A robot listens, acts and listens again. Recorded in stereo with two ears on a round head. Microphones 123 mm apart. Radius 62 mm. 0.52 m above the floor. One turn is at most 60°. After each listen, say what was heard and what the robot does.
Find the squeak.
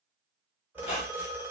The squeak: about 40° left or 140° left. Turn 40° left.
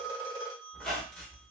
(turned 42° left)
Found it: a squeak, straight ahead, 1 to 2 m away.